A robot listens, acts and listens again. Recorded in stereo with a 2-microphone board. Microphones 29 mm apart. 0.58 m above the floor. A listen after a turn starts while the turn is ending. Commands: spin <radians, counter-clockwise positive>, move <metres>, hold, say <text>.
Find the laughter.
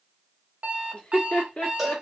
spin 0.79
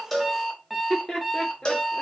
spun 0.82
spin 0.52
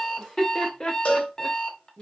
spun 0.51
spin 0.61
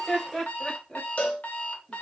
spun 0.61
spin 0.17
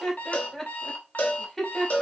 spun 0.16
say Found it: laughter, straight ahead, 1 to 2 m away.